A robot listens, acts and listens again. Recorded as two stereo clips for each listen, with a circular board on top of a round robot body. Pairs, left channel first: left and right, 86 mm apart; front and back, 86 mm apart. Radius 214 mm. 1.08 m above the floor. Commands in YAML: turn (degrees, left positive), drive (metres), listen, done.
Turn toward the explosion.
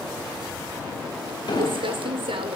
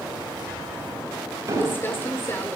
turn: 125
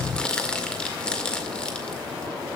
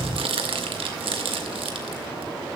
done: "Facing where the explosion came from. I can't hear it now."